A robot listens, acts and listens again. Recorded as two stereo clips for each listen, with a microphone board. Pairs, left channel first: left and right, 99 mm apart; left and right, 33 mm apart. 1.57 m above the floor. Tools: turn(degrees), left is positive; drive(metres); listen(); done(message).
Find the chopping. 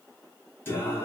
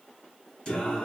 listen()
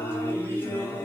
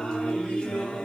listen()
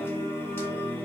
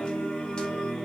done("I can't make out chopping to turn to.")